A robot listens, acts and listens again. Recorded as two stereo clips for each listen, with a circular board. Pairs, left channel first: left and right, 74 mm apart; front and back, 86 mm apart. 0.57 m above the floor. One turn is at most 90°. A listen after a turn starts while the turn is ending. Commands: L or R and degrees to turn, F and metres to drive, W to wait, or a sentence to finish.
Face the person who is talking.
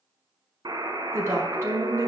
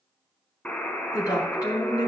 R45
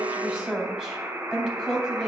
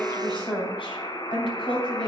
Found it: a woman speaking, straight ahead.